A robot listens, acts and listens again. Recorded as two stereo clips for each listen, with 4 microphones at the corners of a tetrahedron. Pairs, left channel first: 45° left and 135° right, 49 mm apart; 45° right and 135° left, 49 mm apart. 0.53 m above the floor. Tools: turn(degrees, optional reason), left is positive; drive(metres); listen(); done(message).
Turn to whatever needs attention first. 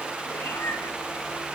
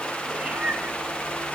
listen()
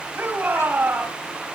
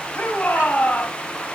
turn(degrees=-90, reason="The shout: 90° right.")
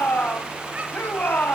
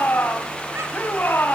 done("Found it: a shout, straight ahead.")